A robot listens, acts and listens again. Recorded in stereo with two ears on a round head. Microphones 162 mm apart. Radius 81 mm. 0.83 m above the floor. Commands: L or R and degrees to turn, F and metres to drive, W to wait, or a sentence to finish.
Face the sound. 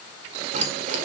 R45
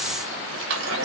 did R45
R75
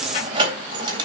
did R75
R25
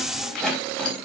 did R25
Found it: keys jangling, straight ahead, over 4 m away.